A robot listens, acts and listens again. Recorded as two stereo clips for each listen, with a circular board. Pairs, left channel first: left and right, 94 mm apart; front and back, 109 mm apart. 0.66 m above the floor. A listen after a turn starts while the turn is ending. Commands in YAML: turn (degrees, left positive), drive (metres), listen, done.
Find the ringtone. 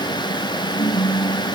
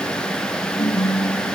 turn: 55
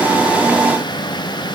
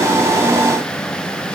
listen: true
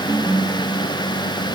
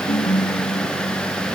turn: -25
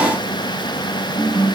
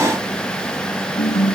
turn: -20
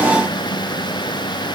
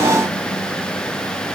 listen: true
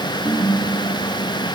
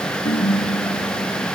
done: "Found it: a ringtone, straight ahead."